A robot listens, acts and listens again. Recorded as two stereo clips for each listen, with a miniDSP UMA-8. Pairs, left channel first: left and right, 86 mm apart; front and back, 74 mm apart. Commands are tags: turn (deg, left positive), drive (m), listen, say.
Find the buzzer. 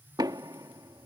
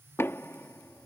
<listen/>
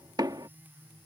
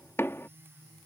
<listen/>
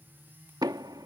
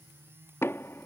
<say>I can't make out a buzzer to turn to.</say>